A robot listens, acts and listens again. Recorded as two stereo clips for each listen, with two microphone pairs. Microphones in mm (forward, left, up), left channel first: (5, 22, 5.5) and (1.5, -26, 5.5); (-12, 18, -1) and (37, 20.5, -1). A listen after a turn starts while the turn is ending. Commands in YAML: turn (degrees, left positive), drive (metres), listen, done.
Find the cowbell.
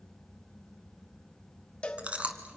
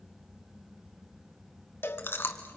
turn: 155
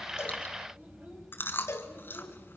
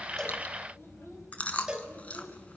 turn: 75
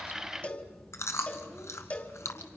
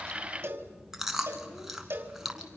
turn: 30
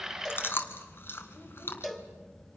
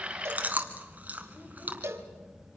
done: "Facing the cowbell."